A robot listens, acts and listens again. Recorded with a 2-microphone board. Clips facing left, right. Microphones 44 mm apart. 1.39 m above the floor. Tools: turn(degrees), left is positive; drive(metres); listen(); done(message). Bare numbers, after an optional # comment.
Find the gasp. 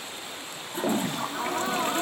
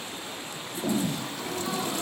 # The gasp: about 55° left or 125° left.
turn(55)
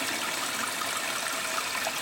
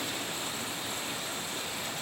listen()
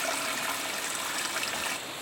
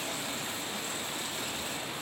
done("I heard a gasp, but can't make it out now. It was about straight ahead or 70° left.")